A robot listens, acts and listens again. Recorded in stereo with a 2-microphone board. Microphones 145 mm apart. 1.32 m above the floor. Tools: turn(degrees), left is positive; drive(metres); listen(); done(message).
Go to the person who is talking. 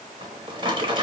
listen()
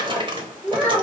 turn(degrees=30)
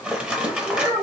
turn(degrees=-20)
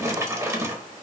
listen()
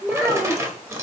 drive(metres=1.0)
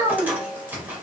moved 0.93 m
drive(metres=1.0)
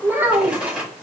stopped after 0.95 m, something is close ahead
turn(degrees=-15)
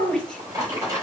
done("Arrived at the child speaking, straight ahead.")